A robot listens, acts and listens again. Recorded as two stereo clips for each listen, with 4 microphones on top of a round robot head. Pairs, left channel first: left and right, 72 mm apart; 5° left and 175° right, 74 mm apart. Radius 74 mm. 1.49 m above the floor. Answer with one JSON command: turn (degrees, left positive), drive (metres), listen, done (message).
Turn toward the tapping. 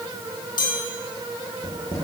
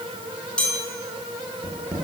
{"turn": 115}
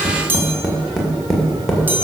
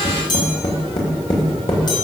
{"done": "Facing the tapping, 2 to 4 m away."}